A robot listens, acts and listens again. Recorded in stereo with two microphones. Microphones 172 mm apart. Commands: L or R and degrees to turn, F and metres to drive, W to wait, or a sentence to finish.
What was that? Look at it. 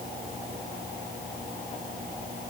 W
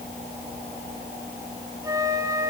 R20
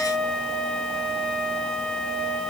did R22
Found it: a flute, straight ahead, 1 to 2 m away.